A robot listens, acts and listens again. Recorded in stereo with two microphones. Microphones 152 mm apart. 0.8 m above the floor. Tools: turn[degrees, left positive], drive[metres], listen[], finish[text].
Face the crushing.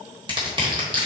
Thought: The crushing: about 35° right or 145° right.
Action: turn[-35]
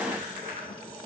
Action: listen[]
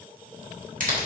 Thought: So it is at 110° right.
Action: turn[-110]
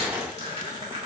Action: listen[]
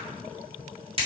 Thought: The crushing is now 40° right.
Action: turn[-40]
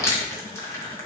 Thought: The crushing is now 20° left.
Action: turn[20]
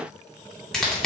Action: finish[Found it: crushing, straight ahead.]